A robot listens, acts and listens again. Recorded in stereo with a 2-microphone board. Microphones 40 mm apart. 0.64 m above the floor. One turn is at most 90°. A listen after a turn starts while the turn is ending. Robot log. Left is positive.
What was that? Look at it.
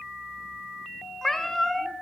cmd yaw +30
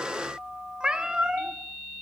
note: So it is at 20° right.
cmd yaw -20
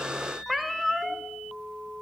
end: Found it: a cat meowing, straight ahead, 1 to 2 m away.